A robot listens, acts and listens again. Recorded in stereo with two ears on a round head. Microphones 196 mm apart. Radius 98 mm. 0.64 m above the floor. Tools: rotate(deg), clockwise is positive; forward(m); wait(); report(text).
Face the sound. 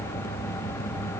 wait()
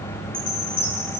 rotate(-25)
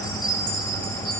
report("Found it: a chime, straight ahead, over 4 m away.")